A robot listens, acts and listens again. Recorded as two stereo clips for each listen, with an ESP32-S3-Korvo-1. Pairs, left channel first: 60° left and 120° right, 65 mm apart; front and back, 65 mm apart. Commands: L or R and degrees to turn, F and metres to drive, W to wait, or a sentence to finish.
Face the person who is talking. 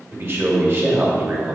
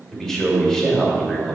R80
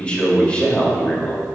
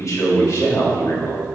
Facing the man speaking.